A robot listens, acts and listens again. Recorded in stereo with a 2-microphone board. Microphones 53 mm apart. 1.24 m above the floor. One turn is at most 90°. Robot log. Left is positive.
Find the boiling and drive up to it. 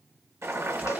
note: The boiling: about 65° right or 115° right.
cmd yaw -65
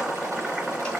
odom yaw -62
note: So it is at 15° right.
cmd yaw -15
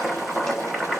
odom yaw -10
cmd fwd 1.0
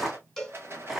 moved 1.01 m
note: The boiling is now 10° right.
cmd yaw -10
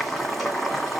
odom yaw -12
cmd fwd 1.0
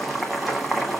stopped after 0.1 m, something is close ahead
end: I am next to the boiling.